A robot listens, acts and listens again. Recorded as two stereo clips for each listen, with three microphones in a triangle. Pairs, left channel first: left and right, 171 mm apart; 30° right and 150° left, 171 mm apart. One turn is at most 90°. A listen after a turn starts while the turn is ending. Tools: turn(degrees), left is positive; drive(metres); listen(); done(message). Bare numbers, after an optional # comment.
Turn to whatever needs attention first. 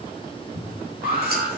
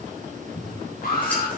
# The alarm: 65° right.
turn(-65)
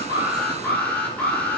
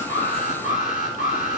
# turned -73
# The alarm is now 10° left.
turn(10)
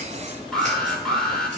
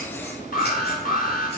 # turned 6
done("Found it: an alarm, straight ahead.")